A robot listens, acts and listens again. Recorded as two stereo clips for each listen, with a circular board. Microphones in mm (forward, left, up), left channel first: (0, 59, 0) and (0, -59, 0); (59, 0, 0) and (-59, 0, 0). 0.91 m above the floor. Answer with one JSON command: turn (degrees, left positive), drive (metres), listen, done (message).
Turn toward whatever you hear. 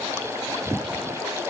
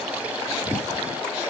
{"listen": true}
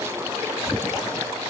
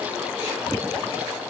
{"listen": true}
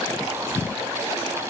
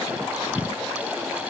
{"done": "I can't make out anything."}